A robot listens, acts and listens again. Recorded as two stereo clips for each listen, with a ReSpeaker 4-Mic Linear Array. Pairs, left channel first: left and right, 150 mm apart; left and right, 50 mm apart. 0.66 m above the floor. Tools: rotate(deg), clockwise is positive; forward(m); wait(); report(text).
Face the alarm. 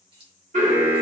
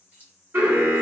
rotate(55)
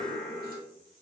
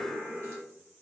rotate(10)
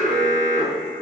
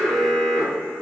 report("Found it: an alarm, straight ahead, 1 to 2 m away.")